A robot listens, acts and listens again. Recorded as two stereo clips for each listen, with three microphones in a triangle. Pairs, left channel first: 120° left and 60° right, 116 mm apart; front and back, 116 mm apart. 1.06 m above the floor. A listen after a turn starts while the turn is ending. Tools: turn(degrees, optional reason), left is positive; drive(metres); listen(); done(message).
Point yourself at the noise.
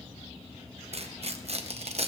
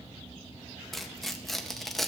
turn(degrees=-90, reason="The tearing paper: 90° right.")
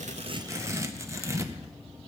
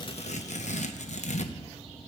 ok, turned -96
done("Facing the tearing paper, under 1 m away.")